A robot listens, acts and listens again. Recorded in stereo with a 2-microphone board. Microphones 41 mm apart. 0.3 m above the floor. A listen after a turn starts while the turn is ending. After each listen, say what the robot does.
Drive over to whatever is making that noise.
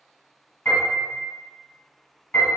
Turn 45° left.
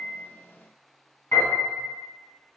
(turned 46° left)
Turn 85° left.
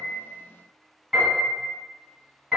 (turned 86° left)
Drive 1.0 m forward.
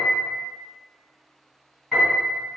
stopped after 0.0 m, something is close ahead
Something is in my way. I am facing the piano but have not reached it.